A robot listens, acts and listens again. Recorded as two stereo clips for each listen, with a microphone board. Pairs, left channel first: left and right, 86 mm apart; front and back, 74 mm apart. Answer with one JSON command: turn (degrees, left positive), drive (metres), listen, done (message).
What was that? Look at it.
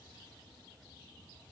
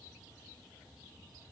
{"listen": true}
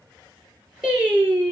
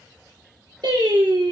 {"turn": -170}
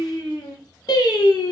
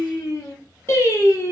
{"turn": 55}
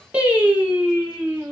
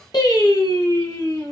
{"turn": -15}
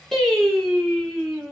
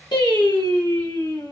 {"done": "Found it: singing, straight ahead, 1 to 2 m away."}